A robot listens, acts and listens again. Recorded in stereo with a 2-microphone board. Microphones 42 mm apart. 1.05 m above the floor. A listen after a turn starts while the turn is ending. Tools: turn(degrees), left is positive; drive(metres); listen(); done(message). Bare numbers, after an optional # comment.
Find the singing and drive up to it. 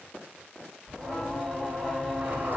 turn(30)
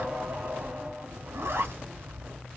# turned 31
# So it is at 25° right.
turn(-25)
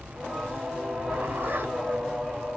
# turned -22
drive(1.0)
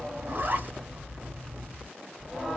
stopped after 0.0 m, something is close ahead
done("Something is in my way. I am facing the singing but have not reached it.")